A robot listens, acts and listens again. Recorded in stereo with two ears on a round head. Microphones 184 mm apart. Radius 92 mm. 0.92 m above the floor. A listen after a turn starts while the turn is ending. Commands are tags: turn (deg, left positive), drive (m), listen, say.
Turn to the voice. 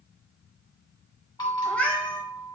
<listen/>
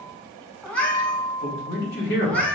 <turn deg="55"/>
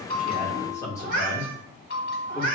<turn deg="15"/>
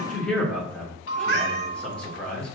<say>Found it: a man speaking, straight ahead.</say>